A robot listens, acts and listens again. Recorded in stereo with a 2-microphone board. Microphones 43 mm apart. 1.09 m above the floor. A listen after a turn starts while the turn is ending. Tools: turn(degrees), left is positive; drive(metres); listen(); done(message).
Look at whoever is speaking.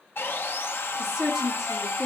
turn(degrees=-30)
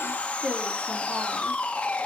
turn(degrees=-145)
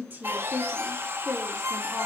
done("Found it: a woman speaking, straight ahead, 2 to 4 m away.")